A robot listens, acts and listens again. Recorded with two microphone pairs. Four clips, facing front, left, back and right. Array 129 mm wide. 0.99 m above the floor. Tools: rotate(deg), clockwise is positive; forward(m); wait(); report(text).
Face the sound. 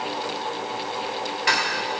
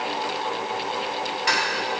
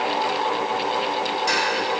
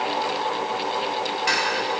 rotate(-15)
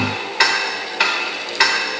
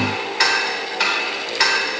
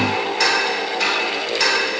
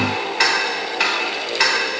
report("Found it: ticking, straight ahead.")